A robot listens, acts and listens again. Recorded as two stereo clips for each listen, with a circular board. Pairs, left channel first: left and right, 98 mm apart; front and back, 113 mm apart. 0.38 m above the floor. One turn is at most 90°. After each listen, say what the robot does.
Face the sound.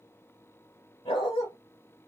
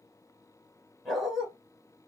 Turn 90° left.
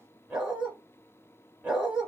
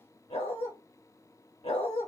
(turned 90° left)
Turn 10° right.
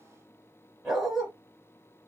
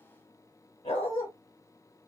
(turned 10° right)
Facing the dog barking.